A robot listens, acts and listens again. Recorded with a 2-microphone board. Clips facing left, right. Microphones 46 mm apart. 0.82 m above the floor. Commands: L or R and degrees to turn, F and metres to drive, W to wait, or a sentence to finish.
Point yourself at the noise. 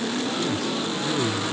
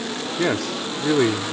R70
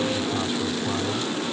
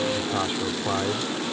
W
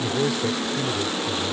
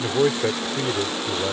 R40
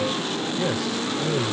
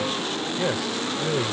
R15
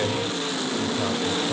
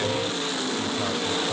W
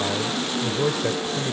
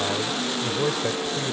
Facing the man speaking.